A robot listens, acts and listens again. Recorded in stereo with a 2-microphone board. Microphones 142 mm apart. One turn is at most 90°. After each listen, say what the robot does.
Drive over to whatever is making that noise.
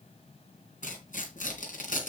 Turn 70° left.
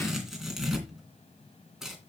Drive 1.0 m forward.
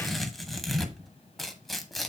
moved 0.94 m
Drive 1.0 m forward.
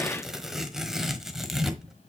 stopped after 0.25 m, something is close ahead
Arrived at the tearing paper, straight ahead.